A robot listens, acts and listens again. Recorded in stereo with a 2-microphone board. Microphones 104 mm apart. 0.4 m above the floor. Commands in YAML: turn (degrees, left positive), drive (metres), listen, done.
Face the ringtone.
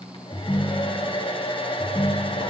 turn: 40
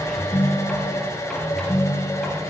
turn: 100
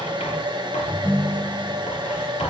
turn: 10
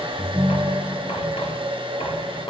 done: "Facing the ringtone."